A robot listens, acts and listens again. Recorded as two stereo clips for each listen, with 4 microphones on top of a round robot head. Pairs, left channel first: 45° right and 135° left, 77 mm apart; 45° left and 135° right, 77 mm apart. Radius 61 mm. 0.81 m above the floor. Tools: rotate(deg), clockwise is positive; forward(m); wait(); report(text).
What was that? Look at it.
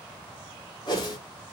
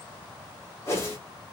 rotate(15)
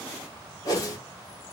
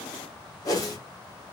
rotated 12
report("Facing the whoosh, 1 to 2 m away.")